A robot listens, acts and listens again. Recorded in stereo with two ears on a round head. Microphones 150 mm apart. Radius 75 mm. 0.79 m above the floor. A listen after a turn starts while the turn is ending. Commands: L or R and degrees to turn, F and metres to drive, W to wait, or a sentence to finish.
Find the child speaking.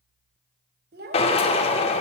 R70
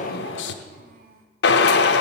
R55
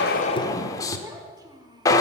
R25
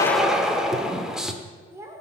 R15
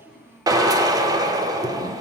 Facing the child speaking, 1 to 2 m away.